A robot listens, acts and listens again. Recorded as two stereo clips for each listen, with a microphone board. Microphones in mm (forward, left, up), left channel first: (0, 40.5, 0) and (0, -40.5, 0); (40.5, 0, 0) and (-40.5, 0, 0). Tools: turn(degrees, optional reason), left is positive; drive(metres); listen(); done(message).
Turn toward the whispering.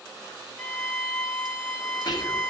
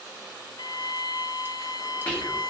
turn(degrees=70, reason="The whispering: 70° left.")
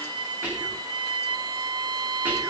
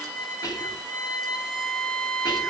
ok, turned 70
turn(degrees=-25, reason="The whispering is now 25° right.")
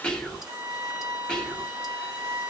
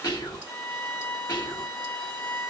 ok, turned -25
turn(degrees=10, reason="The whispering is now 10° left.")
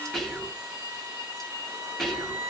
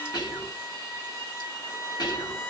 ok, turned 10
done("Facing the whispering.")